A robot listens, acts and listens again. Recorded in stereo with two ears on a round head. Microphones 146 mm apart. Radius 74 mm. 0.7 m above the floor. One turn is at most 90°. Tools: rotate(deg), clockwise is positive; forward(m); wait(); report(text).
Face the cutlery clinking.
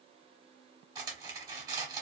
rotate(20)
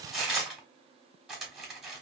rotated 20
report("Found it: cutlery clinking, straight ahead.")